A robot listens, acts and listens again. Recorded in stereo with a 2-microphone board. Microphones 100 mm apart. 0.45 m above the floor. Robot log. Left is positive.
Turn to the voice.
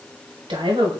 note: The woman speaking: about 55° right or 125° right.
cmd yaw -55
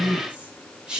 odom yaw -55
end: Found it: a woman speaking, straight ahead, 1 to 2 m away.